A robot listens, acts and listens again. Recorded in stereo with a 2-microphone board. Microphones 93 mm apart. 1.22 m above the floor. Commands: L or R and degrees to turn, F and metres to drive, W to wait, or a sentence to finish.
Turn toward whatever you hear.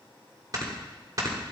R40
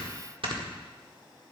R95
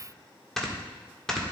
Facing the snoring, 1 to 2 m away.